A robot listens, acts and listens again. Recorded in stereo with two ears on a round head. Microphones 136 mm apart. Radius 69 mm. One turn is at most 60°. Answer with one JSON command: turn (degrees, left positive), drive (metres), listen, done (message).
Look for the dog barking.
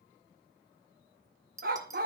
{"turn": -60}
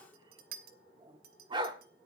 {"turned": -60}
{"turn": -35}
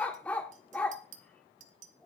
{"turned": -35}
{"turn": 10}
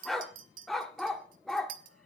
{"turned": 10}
{"done": "Facing the dog barking, 1 to 2 m away."}